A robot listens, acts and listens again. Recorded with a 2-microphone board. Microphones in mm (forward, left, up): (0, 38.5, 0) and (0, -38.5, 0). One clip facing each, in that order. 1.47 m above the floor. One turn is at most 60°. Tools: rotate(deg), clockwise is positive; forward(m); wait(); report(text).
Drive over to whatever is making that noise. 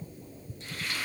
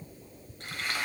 rotate(60)
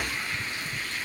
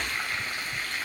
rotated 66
rotate(55)
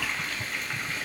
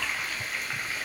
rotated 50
forward(1.0)
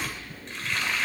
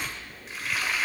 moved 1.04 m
forward(1.0)
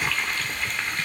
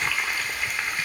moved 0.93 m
rotate(10)
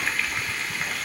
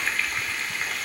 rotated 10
forward(1.0)
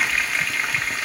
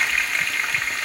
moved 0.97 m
forward(1.0)
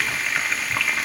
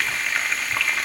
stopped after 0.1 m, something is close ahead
report("Arrived at the frying, straight ahead.")